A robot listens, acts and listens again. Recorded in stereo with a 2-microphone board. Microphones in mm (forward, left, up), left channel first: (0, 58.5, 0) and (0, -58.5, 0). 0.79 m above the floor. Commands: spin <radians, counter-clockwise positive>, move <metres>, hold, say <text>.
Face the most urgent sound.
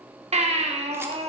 spin -1.31
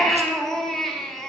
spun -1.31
say Found it: a baby crying, straight ahead.